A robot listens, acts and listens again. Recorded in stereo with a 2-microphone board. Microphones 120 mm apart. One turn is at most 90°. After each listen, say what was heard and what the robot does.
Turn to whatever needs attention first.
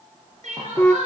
The crying: about 75° right or 105° right. Turn 75° right.
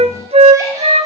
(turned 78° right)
Keep listening.
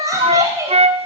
So it is at 25° right. Turn 25° right.
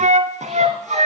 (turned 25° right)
Keep listening.
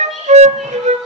Keep listening.
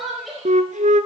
Found it: crying, straight ahead, over 4 m away.